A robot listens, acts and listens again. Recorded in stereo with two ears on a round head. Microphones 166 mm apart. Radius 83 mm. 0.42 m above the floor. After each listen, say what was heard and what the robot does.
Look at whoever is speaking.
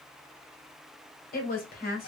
The woman speaking: about 50° left or 130° left. Turn 50° left.
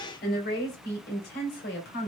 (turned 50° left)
So it is at 70° left. Turn 70° left.
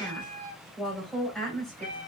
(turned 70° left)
Facing the woman speaking, 2 to 4 m away.